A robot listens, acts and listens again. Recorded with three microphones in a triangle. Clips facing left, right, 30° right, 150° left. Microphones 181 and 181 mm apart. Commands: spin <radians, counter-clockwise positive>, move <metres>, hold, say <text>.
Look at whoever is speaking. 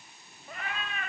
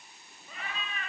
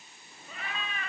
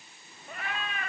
hold
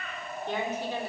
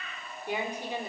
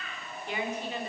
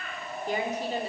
spin -2.79
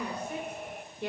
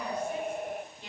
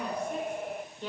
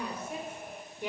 spin 1.31
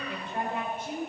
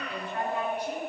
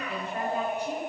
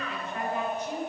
spin 0.44
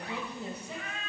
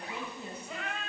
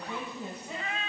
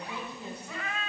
spin 0.70
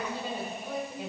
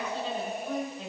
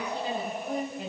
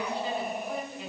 spin 0.17
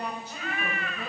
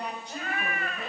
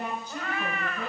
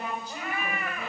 say Facing the woman speaking.